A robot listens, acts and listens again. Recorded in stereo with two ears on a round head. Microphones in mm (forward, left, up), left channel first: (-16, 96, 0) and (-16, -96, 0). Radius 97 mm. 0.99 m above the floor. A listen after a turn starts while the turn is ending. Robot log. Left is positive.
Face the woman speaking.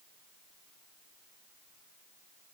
cmd idle
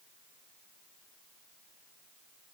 cmd idle
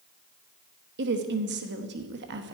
note: The woman speaking: about 60° right or 120° right.
cmd yaw -60
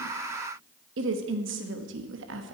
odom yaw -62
note: So it is at 60° right.
cmd yaw -60
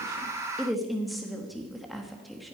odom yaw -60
end: Found it: a woman speaking, straight ahead.